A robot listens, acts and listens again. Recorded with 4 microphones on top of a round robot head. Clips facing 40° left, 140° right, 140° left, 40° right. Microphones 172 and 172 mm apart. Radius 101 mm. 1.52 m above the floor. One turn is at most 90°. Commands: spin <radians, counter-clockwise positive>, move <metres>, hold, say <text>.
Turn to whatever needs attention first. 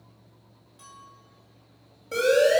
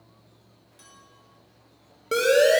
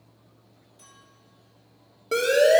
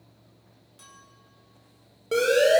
spin -1.57
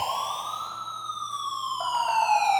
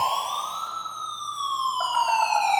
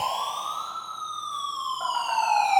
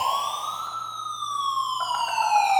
spin -0.79
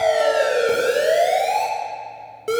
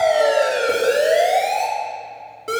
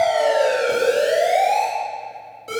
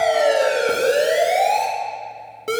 spin -0.44
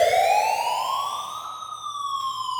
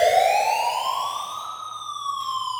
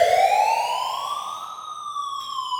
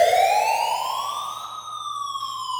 say Found it: a siren, straight ahead.